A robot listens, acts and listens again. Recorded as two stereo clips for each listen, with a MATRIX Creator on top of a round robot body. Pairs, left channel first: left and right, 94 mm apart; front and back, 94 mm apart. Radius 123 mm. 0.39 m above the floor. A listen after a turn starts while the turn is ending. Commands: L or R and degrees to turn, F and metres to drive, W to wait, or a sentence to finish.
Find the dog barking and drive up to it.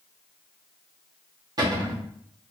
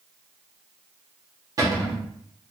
W
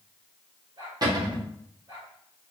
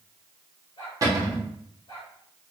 R45
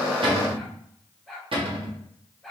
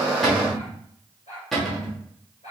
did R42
F1.0
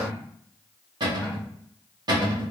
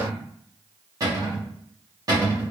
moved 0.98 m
W
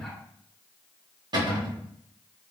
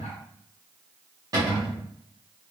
W
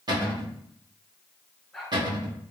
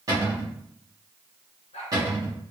F1.0
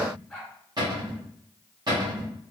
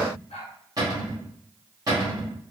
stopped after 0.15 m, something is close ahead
Arrived at the dog barking, straight ahead.